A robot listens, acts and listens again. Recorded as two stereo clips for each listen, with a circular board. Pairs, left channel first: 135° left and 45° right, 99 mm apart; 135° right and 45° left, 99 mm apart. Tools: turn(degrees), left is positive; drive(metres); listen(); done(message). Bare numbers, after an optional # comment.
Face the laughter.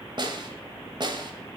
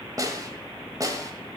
listen()
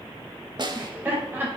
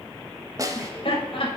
# The laughter: 115° right.
turn(-115)
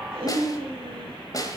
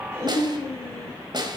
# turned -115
# The laughter is now 15° right.
turn(-15)
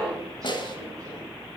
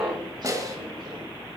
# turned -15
done("Facing the laughter.")